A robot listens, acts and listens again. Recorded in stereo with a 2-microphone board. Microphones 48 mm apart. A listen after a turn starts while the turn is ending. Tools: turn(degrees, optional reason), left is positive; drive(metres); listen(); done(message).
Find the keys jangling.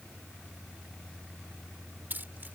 turn(degrees=-40, reason="The keys jangling: about 40° right or 140° right.")
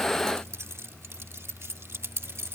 turn(degrees=-120, reason="So it is at 120° right.")
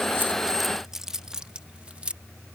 turn(degrees=-25, reason="The keys jangling is now 25° right.")
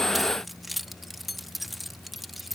done("Found it: keys jangling, straight ahead.")